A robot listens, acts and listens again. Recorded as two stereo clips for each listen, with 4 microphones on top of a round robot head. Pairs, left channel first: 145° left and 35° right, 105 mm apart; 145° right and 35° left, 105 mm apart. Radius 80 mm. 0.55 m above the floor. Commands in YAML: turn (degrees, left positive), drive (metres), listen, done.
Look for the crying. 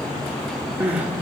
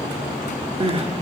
turn: 40
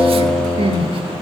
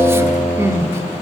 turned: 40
listen: true
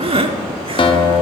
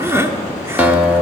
turn: -25
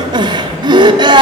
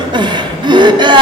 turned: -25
done: "Found it: crying, straight ahead."